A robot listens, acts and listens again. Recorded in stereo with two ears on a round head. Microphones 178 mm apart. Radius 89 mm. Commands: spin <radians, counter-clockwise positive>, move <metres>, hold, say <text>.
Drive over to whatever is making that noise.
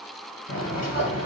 spin 0.61
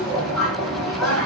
move 1.0
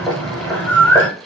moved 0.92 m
move 1.0
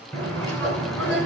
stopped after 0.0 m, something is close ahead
say I am next to the bird.